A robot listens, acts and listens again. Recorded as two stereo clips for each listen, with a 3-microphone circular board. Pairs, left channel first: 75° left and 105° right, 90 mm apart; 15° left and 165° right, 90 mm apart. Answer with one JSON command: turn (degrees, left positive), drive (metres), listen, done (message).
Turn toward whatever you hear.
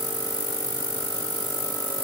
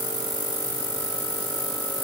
{"listen": true}
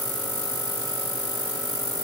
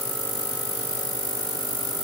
{"listen": true}
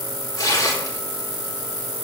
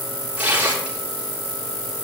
{"turn": 125}
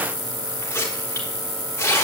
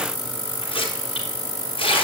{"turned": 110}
{"turn": 15}
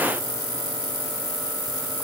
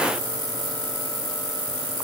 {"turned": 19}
{"listen": true}
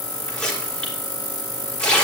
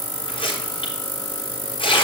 {"done": "Facing the tearing paper, over 4 m away."}